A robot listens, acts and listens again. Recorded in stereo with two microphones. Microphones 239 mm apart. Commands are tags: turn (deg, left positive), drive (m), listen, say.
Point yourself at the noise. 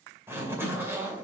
<turn deg="-30"/>
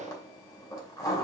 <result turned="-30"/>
<turn deg="15"/>
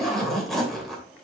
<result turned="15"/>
<say>Found it: a zipper, straight ahead.</say>